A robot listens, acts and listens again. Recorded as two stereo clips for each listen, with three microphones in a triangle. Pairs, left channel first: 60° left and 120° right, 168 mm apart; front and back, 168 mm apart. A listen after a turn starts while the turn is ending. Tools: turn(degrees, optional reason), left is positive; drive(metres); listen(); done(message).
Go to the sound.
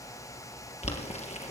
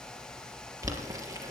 turn(degrees=110, reason="The boiling: 110° left.")
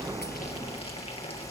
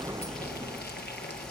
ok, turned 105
drive(metres=1.0)
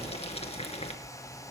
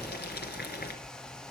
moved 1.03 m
turn(degrees=10, reason="The boiling is now 10° left.")
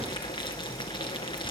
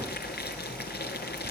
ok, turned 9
drive(metres=1.0)
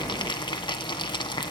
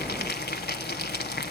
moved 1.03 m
drive(metres=1.0)
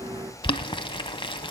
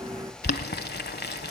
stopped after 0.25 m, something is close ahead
done("I am next to the boiling.")